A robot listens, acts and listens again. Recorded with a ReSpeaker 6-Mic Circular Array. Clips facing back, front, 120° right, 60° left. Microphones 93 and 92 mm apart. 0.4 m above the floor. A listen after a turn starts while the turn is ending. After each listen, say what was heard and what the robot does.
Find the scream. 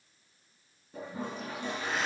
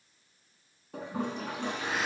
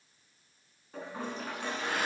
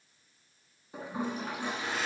Keep listening.
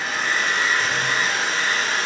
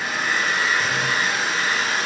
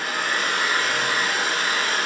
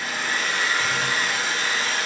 Keep listening.
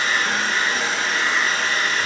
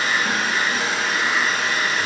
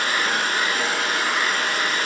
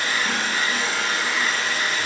I can't make out a scream to turn to.